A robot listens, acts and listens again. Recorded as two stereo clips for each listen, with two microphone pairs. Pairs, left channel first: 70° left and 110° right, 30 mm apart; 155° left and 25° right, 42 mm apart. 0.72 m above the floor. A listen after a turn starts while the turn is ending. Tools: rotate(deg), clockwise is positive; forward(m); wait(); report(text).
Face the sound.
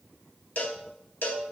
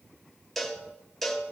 rotate(-70)
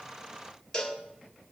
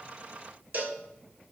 rotate(-10)
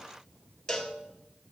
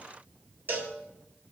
report("Found it: a cowbell, straight ahead, 1 to 2 m away.")